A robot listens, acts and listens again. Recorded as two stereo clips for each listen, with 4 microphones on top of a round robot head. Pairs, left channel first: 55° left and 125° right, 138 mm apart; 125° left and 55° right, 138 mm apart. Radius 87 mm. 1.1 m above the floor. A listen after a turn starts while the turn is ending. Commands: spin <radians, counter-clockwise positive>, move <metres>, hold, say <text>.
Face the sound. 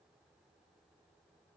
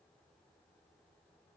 hold
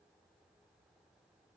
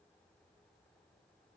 hold
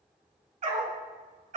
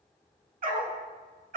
spin -1.48
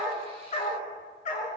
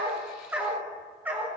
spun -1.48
spin 0.35
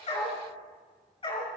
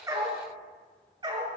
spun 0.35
say Facing the dog barking.